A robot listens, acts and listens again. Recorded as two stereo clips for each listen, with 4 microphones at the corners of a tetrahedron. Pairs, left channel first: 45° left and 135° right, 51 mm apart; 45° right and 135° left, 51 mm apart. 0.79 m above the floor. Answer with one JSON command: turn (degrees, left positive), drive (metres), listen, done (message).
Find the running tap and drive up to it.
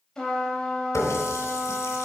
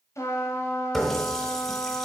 {"turn": 40}
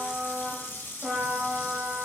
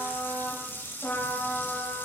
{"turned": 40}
{"drive": 1.0}
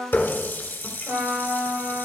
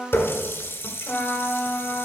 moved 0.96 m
{"turn": -10}
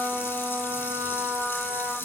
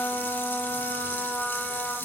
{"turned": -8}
{"drive": 1.0}
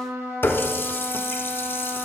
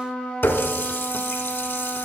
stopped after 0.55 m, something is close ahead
{"done": "I am next to the running tap."}